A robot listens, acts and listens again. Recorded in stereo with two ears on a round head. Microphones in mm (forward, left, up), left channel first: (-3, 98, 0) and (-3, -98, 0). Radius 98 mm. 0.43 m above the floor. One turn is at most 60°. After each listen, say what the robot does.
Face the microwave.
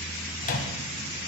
Turn 40° left.
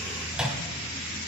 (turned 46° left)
Found it: a microwave, straight ahead.